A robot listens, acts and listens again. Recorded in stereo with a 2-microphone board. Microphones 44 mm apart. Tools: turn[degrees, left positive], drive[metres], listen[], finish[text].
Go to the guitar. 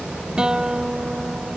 Action: turn[-30]
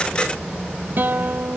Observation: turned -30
Thought: So it is at 135° right.
Action: turn[-135]
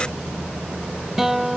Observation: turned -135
Thought: The guitar is now 10° right.
Action: turn[-10]
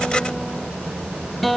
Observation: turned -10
Action: drive[1.0]
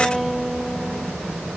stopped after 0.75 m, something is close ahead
Action: finish[Something is in my way. I am facing the guitar but have not reached it.]